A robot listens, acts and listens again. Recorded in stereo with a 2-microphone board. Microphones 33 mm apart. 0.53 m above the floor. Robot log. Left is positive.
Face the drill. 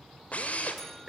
note: The drill: about 45° left or 135° left.
cmd yaw +45
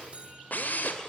note: So it is at 85° left.
cmd yaw +85
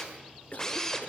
note: The drill is now 20° left.
cmd yaw +20
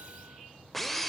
end: Found it: a drill, straight ahead, 2 to 4 m away.